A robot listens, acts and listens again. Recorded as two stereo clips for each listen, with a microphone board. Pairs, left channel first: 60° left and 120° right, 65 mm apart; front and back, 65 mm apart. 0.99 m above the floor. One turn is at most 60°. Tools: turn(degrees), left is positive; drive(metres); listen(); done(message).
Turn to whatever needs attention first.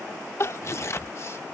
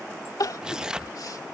turn(degrees=15)
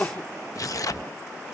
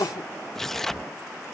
done("Found it: crying, straight ahead.")